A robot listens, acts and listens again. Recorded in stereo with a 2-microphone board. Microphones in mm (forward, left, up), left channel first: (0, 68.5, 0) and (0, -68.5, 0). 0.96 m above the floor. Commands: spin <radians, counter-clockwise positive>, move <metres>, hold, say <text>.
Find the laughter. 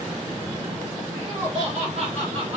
spin -0.87
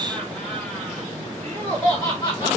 spin 0.52
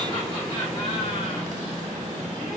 hold
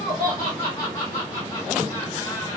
spin 0.44
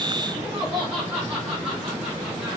spin -0.17
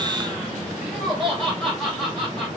say Found it: laughter, straight ahead.